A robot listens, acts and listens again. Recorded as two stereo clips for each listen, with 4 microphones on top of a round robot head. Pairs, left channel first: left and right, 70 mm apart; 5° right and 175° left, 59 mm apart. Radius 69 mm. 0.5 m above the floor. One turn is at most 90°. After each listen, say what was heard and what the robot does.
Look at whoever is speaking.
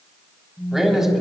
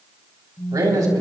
The man speaking: 175° right. Turn 90° right.
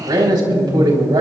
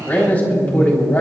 The man speaking is now 70° right. Turn 70° right.
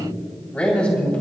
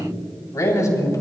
The man speaking is now 15° left. Turn 15° left.
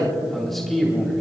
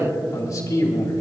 Found it: a man speaking, straight ahead.